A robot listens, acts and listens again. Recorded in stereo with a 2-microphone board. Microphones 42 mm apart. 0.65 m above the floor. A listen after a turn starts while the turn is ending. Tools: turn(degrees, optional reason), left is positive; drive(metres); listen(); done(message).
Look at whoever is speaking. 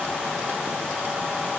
listen()
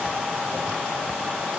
listen()
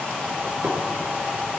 done("I can't make out anyone speaking to turn to.")